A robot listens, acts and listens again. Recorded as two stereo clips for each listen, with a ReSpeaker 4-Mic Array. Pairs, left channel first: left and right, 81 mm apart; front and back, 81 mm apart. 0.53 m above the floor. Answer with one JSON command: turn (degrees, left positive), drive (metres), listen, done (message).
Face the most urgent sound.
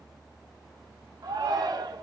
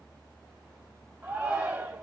{"turn": -125}
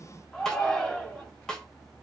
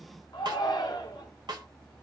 {"done": "Facing the shout, 1 to 2 m away."}